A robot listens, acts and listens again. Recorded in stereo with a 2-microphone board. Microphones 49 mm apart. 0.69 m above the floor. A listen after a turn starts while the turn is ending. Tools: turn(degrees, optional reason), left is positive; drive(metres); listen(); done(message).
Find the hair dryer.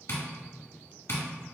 listen()
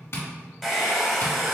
turn(degrees=30)
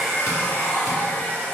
turn(degrees=150, reason="So it is at 150° left.")
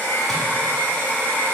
turn(degrees=40, reason="The hair dryer is now 40° left.")
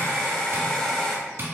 turn(degrees=15, reason="The hair dryer is now 15° left.")
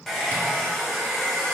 done("Found it: a hair dryer, straight ahead, under 1 m away.")